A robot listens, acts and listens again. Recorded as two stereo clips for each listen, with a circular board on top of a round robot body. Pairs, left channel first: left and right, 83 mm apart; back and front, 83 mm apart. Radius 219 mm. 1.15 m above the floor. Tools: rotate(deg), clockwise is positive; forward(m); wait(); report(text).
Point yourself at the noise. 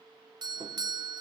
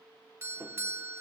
rotate(60)
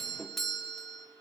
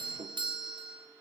report("Facing the doorbell, 1 to 2 m away.")